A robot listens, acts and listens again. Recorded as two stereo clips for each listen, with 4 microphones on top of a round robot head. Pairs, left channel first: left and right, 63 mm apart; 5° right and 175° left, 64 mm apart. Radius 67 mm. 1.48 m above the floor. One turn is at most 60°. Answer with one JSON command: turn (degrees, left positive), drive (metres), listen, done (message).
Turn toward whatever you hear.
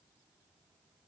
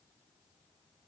{"listen": true}
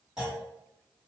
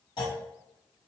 {"done": "Found it: a clunk, straight ahead."}